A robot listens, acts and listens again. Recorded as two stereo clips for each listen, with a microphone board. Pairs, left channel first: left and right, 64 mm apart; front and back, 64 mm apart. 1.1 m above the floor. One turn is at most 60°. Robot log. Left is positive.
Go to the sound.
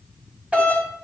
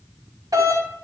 note: The doorbell: 160° right.
cmd yaw -60
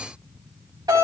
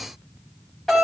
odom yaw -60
note: The doorbell is now 85° right.
cmd yaw -60
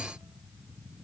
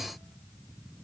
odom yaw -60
note: Nothing new. It was at 25° right.
cmd yaw -25
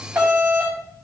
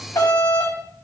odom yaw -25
note: The doorbell is now 20° right.
cmd yaw -20
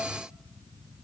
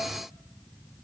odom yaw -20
cmd idle
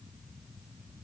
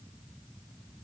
cmd idle
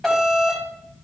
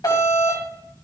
cmd fwd 1.0
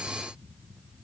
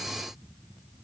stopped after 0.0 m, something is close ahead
cmd idle
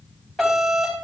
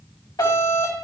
end: Blocked. The doorbell is further on, straight ahead.